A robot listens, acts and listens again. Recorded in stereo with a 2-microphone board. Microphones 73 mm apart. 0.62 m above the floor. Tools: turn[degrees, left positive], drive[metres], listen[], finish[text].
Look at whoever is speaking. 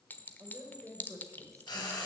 Thought: The woman speaking: about 45° right or 135° right.
Action: turn[-45]
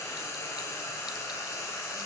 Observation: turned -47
Action: listen[]
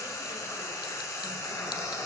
Action: listen[]
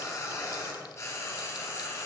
Action: finish[I heard a woman speaking, but can't make it out now. It was about 5° left or 90° right.]